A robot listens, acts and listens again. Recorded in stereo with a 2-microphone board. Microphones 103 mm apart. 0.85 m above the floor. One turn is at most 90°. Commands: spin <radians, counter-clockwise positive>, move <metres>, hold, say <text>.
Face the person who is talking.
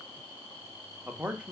spin -0.52
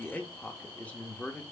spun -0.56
spin 0.26
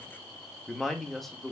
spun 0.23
say Found it: a man speaking, straight ahead.